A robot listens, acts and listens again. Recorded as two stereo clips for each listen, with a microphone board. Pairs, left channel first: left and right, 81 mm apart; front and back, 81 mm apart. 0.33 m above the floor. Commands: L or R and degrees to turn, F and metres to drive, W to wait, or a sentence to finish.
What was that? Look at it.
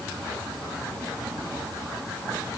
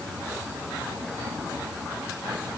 W
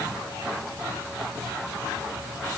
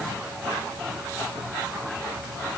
W
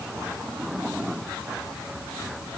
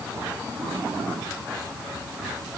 I can't make out anything to turn to.